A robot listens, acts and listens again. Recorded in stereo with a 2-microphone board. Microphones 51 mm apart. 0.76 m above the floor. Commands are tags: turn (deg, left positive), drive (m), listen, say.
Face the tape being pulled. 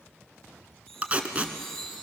<turn deg="-30"/>
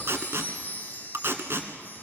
<turn deg="-115"/>
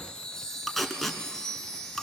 <say>Facing the tape being pulled, 1 to 2 m away.</say>